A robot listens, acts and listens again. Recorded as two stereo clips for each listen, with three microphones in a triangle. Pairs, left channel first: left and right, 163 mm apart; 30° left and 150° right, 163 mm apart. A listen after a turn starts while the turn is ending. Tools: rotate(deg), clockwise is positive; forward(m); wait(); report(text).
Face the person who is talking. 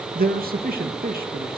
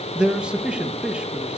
rotate(65)
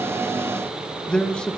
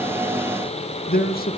report("Facing the man speaking.")